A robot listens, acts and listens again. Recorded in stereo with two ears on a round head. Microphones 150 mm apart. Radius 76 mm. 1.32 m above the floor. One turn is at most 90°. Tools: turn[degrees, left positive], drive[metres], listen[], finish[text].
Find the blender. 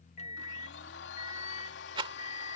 Action: turn[90]
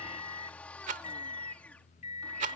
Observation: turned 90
Action: listen[]
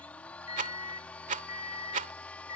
Thought: The blender is now 10° left.
Action: turn[10]
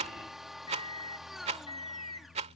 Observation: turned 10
Action: finish[Found it: a blender, straight ahead.]